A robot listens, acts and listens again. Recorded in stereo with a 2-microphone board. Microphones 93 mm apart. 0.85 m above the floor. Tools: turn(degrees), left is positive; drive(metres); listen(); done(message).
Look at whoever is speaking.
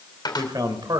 turn(degrees=-50)
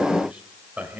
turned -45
turn(degrees=-20)
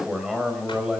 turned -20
turn(degrees=-10)
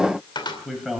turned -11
done("Found it: a man speaking, straight ahead, over 4 m away.")